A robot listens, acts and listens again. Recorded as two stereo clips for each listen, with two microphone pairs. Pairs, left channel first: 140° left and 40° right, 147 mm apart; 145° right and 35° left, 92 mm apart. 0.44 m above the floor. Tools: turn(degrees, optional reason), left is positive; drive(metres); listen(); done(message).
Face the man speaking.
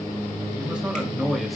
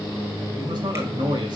turn(degrees=45, reason="The man speaking: 45° left.")
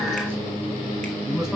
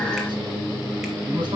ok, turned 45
turn(degrees=45, reason="The man speaking is now 45° left.")
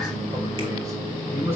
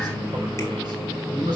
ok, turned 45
turn(degrees=30, reason="The man speaking is now 30° left.")
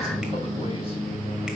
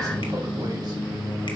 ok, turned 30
listen()
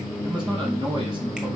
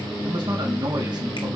listen()
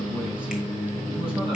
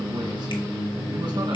done("I heard a man speaking from this way, but can't make it out now.")